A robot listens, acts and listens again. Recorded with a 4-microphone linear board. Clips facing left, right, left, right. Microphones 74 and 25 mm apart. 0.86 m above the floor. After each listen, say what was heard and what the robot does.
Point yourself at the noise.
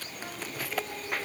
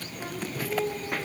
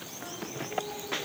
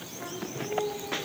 The singing: about 50° right or 130° right. Turn 50° right.
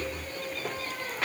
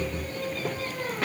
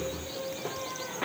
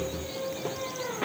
So it is at 75° right. Turn 75° right.
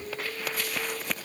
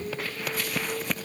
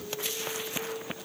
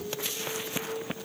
The singing is now 15° right. Turn 15° right.
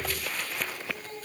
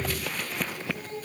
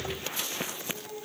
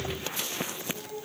Facing the singing.